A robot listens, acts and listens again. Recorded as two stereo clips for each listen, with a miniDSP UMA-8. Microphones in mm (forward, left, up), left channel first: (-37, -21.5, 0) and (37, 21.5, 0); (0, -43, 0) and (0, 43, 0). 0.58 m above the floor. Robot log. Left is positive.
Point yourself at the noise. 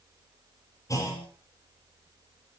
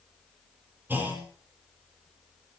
note: The clunk: 160° left.
cmd yaw +160
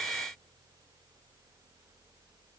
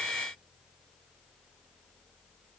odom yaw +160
end: I heard a clunk from this way, but can't make it out now.